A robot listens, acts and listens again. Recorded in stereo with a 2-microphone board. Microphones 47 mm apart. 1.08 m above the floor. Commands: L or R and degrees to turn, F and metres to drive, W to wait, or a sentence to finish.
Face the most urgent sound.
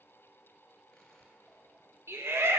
R65
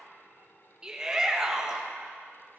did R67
R20
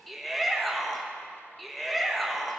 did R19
Found it: a shout, straight ahead.